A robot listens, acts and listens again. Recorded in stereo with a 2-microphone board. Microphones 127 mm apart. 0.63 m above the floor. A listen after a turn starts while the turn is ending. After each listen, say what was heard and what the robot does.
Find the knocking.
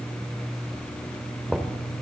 Turn 30° left.
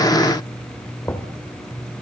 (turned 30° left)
So it is at 155° left. Turn 155° left.
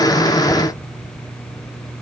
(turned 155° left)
Keep listening.
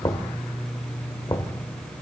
The knocking is now 30° left. Turn 30° left.
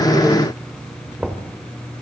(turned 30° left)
The knocking is now 10° right. Turn 10° right.
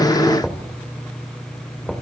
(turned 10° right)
Facing the knocking.